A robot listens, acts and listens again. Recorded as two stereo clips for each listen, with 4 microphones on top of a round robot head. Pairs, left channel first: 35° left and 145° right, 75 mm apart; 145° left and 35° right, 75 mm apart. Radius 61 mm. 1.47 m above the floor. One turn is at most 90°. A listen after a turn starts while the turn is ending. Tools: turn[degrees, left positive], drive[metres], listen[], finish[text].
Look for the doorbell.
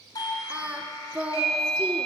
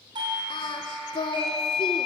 Thought: The doorbell: 10° right.
Action: turn[-10]
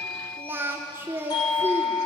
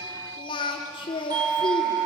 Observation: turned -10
Action: finish[Found it: a doorbell, straight ahead, over 4 m away.]